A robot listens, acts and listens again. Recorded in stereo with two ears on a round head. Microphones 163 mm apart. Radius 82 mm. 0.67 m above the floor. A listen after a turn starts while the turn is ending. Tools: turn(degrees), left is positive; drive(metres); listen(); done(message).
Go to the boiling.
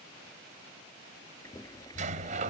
turn(degrees=20)
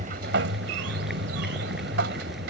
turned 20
listen()
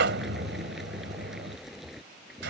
drive(metres=1.0)
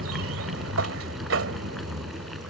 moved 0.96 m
drive(metres=1.0)
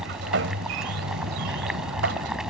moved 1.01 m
drive(metres=1.0)
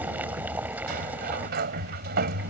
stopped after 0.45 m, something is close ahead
turn(degrees=-10)
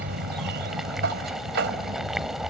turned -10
done("Arrived at the boiling, straight ahead.")